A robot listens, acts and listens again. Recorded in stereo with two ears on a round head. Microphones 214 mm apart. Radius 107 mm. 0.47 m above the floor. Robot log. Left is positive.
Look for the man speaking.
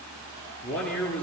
cmd yaw +30
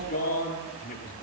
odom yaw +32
note: So it is at 140° left.
cmd yaw +140
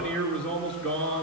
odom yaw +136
end: Facing the man speaking.